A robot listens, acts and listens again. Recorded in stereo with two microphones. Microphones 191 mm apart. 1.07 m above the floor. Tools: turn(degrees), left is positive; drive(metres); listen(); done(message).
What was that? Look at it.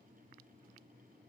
listen()
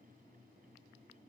listen()
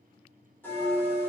turn(degrees=30)
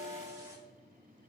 turn(degrees=-20)
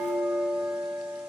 done("Found it: a bell, straight ahead, 2 to 4 m away.")